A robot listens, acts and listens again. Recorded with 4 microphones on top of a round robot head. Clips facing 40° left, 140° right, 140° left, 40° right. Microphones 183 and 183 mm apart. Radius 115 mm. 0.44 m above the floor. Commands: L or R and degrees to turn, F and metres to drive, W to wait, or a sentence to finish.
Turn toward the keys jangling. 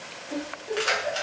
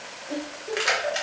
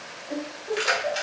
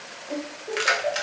R65
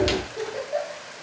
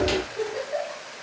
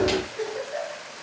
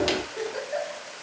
W
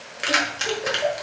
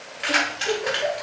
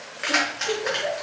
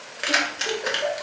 L10
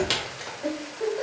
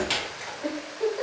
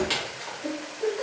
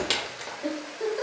Found it: keys jangling, straight ahead, 1 to 2 m away.